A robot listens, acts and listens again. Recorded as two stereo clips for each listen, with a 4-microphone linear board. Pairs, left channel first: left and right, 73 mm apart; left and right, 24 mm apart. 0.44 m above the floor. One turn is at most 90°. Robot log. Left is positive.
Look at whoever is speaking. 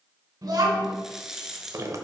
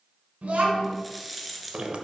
note: The child speaking: about 55° right or 125° right.
cmd yaw -55
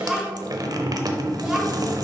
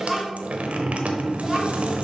end: Facing the child speaking, 2 to 4 m away.